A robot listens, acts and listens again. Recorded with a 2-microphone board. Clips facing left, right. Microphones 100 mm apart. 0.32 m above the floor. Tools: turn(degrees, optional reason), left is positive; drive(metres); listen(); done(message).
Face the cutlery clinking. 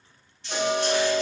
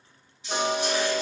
turn(degrees=-30)
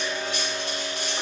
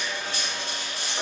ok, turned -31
turn(degrees=-135, reason="So it is at 135° right.")
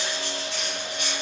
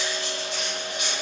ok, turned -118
turn(degrees=-20, reason="The cutlery clinking is now 20° right.")
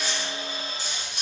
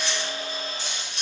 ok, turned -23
done("Found it: cutlery clinking, straight ahead, 1 to 2 m away.")